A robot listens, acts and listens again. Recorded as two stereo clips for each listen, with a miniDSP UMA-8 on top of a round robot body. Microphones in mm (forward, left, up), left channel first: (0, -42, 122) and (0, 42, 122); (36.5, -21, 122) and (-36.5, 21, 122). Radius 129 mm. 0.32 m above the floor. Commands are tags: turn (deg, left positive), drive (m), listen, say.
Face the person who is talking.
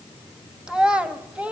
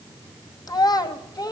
<turn deg="15"/>
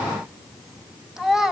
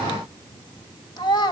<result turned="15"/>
<say>Found it: a child speaking, straight ahead.</say>